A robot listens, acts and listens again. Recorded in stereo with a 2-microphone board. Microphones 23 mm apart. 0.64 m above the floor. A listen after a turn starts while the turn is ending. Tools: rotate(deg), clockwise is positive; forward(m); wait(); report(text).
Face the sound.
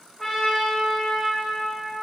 rotate(-30)
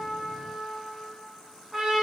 rotate(15)
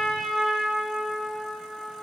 report("Facing the trumpet.")